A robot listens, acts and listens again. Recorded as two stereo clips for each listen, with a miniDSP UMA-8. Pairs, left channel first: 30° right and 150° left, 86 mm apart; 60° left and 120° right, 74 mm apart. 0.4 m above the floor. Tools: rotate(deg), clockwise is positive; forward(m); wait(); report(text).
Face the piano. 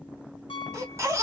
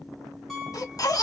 rotate(30)
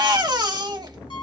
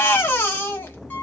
wait()
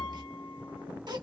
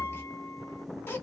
wait()
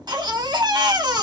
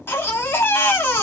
report("Facing where the piano came from. I can't hear it now.")